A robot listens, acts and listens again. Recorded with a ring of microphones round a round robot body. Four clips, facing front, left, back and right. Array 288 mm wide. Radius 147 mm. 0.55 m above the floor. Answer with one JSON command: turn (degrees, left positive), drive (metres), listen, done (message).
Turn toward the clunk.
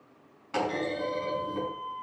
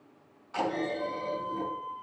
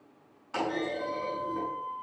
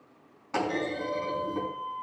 {"turn": -75}
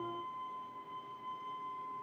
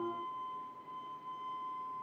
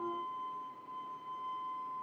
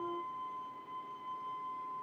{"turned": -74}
{"done": "I heard a clunk from this way, but can't make it out now."}